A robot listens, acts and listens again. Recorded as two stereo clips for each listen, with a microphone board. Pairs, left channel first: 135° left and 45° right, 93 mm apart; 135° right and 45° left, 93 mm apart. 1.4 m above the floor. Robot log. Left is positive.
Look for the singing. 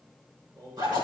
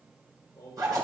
note: The singing: 85° right.
cmd yaw -85
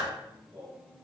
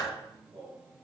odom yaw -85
note: The singing is now 30° left.
cmd yaw +30
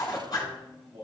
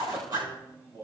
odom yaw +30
end: Facing the singing, over 4 m away.